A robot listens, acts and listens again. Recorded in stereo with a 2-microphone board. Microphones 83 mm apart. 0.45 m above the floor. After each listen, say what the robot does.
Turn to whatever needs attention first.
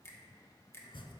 Keep listening.
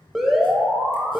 Turn 30° right.
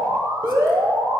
Turn 145° right.
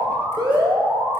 Turn 65° right.
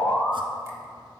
Facing the alarm.